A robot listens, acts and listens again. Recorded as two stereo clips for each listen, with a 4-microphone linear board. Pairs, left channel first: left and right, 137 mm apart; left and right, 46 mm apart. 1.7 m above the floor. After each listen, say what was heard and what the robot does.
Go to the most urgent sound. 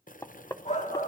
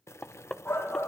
The shout: about 60° left or 120° left. Turn 60° left.
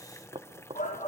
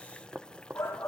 So it is at 60° left. Turn 60° left.
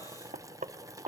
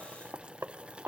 Keep listening.
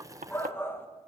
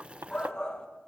The shout is now 15° left. Turn 15° left.
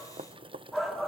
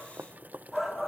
Drive 1.0 m forward.
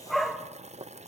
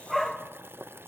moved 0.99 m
Drive 1.0 m forward.
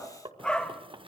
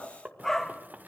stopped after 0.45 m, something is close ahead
I am next to the shout.